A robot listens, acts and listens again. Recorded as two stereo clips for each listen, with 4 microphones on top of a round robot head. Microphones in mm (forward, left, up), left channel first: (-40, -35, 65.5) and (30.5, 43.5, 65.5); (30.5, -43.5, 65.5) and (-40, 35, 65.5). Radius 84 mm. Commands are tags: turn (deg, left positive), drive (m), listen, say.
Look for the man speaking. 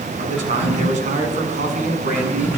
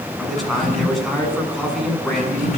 <turn deg="40"/>
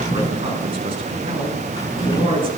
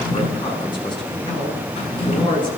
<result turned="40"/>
<say>Facing the man speaking.</say>